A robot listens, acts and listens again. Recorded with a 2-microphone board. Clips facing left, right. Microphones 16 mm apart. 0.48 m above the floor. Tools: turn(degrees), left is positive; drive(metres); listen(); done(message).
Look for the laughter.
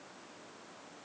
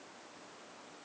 listen()
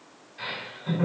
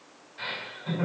turn(degrees=-40)
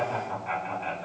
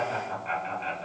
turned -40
turn(degrees=-90)
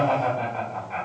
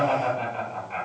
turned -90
done("Found it: laughter, straight ahead, 1 to 2 m away.")